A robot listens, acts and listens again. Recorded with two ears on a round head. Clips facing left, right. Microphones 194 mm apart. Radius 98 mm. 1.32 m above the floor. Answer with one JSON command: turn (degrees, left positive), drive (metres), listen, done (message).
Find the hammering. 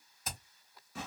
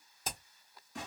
{"turn": -25}
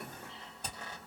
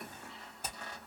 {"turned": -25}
{"done": "Facing the hammering."}